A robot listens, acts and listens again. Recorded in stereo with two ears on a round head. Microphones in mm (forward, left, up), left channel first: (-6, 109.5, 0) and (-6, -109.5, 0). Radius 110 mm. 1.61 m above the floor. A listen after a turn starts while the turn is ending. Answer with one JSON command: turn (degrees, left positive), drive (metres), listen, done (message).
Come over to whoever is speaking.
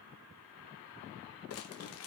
{"listen": true}
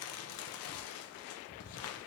{"listen": true}
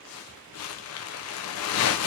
{"done": "I can't make out anyone speaking to turn to."}